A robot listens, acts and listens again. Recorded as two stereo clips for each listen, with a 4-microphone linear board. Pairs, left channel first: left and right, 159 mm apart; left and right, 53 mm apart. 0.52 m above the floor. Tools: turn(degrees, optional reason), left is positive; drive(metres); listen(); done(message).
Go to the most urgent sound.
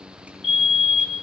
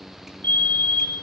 turn(degrees=45, reason="The fire alarm: about 45° left or 135° left.")
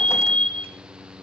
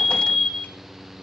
drive(metres=1.0)
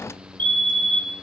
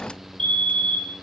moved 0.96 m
turn(degrees=15, reason="The fire alarm is now 15° left.")
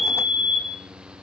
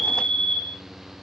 drive(metres=1.0)
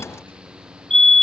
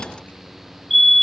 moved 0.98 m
drive(metres=1.0)
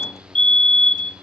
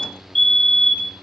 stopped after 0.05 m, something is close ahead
turn(degrees=10, reason="The fire alarm is now 10° left.")
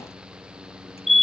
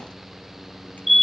done("I am next to the fire alarm.")